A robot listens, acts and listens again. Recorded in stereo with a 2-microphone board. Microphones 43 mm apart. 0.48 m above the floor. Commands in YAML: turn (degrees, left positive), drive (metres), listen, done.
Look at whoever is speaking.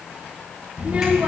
turn: -25
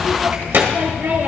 turn: -125
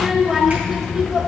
turn: -15
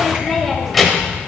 done: "Found it: a child speaking, straight ahead, 1 to 2 m away."